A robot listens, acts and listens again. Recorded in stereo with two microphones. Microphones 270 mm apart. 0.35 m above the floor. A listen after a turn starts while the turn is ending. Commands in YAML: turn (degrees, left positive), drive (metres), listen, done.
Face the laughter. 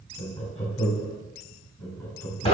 turn: 30
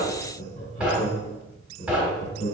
turn: 155
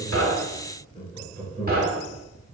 turn: 20
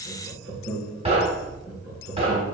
turn: 10
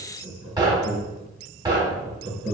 done: "Found it: laughter, straight ahead."